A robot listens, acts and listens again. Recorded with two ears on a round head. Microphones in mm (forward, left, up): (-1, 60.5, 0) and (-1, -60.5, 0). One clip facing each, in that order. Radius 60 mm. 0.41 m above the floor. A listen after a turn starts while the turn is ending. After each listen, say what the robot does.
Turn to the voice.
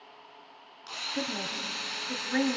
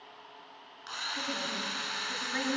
Turn 55° left.
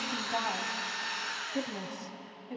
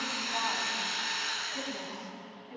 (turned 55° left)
Turn 65° left.
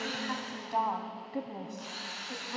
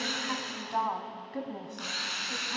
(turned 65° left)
Turn 15° left.
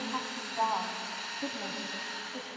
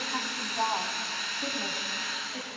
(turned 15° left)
Keep listening.
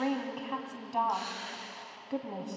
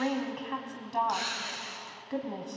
Facing the woman speaking, 2 to 4 m away.